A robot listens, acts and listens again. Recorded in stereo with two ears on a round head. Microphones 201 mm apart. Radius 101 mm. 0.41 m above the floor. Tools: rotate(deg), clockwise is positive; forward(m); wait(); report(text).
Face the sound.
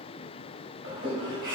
rotate(55)
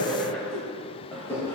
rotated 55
rotate(-10)
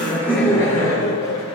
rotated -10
rotate(-20)
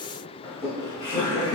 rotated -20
rotate(-15)
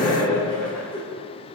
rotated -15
report("Facing the laughter, 2 to 4 m away.")